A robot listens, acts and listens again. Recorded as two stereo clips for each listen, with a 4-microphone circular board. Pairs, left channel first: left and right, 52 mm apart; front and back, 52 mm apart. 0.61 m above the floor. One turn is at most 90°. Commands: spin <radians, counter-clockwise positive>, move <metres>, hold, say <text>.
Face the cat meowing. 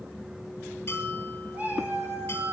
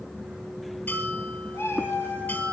spin -0.70
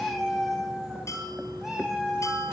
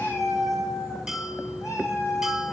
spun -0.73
spin -0.26
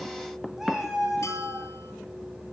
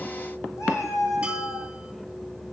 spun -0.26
say Found it: a cat meowing, straight ahead.